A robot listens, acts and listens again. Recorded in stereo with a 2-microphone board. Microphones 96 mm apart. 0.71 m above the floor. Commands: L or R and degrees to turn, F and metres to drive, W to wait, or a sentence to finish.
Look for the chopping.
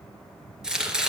R30
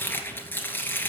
L20
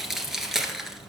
Found it: chopping, straight ahead.